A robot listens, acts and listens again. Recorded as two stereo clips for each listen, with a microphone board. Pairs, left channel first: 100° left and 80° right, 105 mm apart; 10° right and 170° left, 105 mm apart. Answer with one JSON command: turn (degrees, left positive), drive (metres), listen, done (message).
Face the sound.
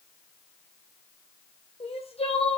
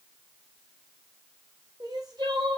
{"turn": 120}
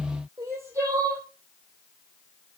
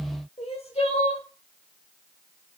{"turn": -15}
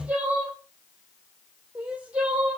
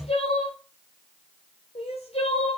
{"done": "Facing the crying, 2 to 4 m away."}